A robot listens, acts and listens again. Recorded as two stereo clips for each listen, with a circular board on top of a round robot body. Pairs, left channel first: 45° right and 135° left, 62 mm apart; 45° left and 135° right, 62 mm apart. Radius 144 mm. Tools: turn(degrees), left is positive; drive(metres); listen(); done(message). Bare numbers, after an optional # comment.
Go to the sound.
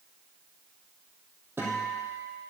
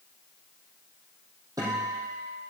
# The guitar: 165° right.
turn(-165)
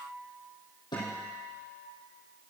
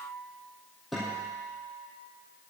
# The guitar is now 45° right.
turn(-45)
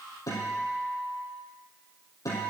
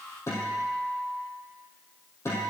drive(1.0)
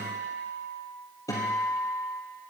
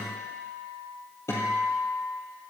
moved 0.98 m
drive(1.0)
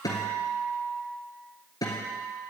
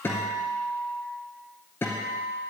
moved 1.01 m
# The guitar is now 15° right.
turn(-15)
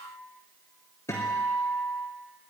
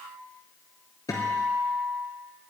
drive(1.0)
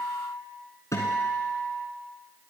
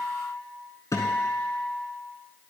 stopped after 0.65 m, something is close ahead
done("I am next to the guitar.")